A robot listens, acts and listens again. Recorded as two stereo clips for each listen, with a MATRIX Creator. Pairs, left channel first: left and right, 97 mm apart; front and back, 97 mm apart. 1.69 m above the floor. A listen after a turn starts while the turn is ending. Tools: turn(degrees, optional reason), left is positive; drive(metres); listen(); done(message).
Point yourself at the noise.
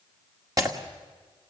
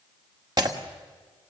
turn(degrees=-140, reason="The breaking glass: 140° right.")
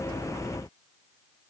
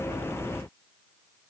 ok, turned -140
done("I heard breaking glass from this way, but can't make it out now.")